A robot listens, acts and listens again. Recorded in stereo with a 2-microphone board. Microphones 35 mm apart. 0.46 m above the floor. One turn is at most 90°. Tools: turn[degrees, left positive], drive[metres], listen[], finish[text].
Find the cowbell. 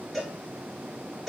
Action: turn[-30]
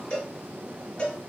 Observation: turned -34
Thought: So it is at 30° left.
Action: turn[30]
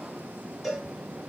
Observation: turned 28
Action: finish[Facing the cowbell, 1 to 2 m away.]